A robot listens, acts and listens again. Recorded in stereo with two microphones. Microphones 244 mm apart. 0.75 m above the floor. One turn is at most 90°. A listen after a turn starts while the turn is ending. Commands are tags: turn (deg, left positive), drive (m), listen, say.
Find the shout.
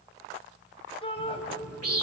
<turn deg="25"/>
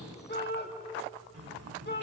<turn deg="90"/>
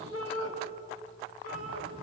<turn deg="70"/>
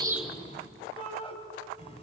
<turn deg="25"/>
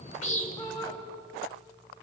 <turn deg="15"/>
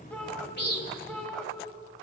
<say>Found it: a shout, straight ahead.</say>